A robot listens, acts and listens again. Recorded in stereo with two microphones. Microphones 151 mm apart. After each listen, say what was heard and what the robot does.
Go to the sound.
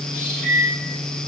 The microwave: about 70° right or 110° right. Turn 70° right.
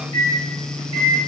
So it is at 35° right. Turn 35° right.
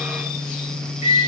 The microwave is now 15° right. Turn 15° right.
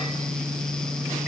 Keep listening.
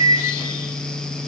Drive 1.0 m forward.
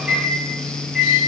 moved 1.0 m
Drive 1.0 m forward.
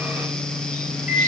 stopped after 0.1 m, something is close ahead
Arrived at the microwave, straight ahead.